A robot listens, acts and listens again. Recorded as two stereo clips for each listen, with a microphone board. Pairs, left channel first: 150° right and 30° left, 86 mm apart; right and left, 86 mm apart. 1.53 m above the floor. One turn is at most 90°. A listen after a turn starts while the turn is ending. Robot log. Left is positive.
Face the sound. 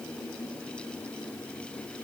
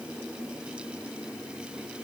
cmd idle
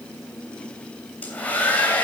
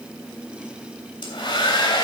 note: The hair dryer: 80° right.
cmd yaw -80
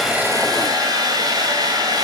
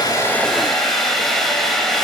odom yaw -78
end: Facing the hair dryer, 2 to 4 m away.